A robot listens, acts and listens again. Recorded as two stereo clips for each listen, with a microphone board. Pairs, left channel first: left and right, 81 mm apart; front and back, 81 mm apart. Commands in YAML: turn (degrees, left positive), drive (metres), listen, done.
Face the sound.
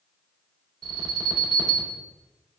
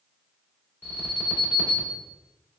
turn: -115
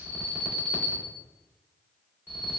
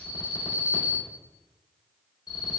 turn: -20
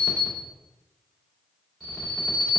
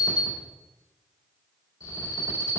done: "Found it: an alarm, straight ahead."